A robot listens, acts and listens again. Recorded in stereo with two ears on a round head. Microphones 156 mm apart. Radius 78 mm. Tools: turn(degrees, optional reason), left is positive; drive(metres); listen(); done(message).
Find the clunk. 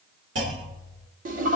turn(degrees=-75, reason="The clunk: about 75° right or 105° right.")
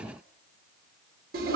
listen()
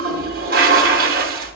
done("I heard a clunk, but can't make it out now. It was about straight ahead or 30° right.")